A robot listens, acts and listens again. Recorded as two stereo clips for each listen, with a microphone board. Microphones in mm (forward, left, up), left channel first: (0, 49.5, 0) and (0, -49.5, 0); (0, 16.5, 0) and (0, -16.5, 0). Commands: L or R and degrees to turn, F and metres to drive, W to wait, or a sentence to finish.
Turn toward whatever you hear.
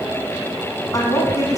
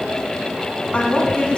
L40
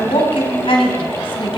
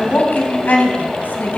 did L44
L120
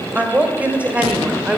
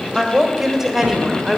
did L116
R15
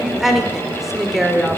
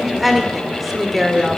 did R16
Facing the woman speaking.